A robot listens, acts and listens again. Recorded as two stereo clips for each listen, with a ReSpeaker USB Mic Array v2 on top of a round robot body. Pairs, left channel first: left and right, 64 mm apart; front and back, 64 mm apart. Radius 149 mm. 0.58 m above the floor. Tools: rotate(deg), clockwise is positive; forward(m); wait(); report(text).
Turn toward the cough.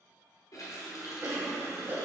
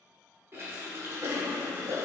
rotate(145)
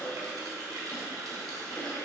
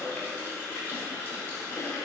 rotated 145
rotate(-35)
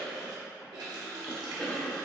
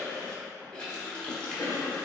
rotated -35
rotate(-15)
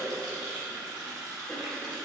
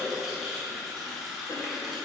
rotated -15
wait()
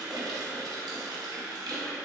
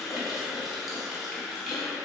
wait()
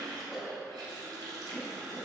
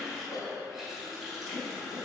report("Facing the cough, 1 to 2 m away.")